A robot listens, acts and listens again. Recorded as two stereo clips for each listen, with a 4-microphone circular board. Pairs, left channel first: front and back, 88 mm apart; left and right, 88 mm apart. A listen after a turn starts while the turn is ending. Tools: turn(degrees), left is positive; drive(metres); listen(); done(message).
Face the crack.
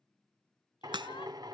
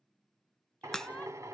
turn(degrees=175)
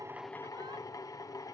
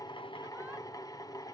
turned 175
done("Facing where the crack came from. I can't hear it now.")